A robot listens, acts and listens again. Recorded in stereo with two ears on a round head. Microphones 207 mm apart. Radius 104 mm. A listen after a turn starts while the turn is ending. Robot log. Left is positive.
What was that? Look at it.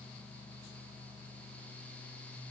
cmd idle
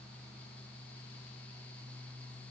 cmd idle
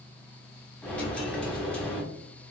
cmd yaw +30
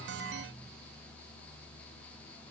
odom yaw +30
cmd idle
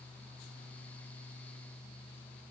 end: I heard a dropped coin, but can't make it out now. It was about 25° right or 145° left.